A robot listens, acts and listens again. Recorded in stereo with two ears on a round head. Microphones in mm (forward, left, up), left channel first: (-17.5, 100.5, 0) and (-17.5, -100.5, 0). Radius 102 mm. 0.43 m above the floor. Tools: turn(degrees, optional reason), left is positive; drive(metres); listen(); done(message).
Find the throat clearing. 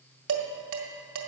listen()
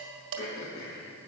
turn(degrees=65, reason="The throat clearing: about 65° left or 115° left.")
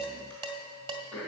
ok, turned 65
done("Facing the throat clearing.")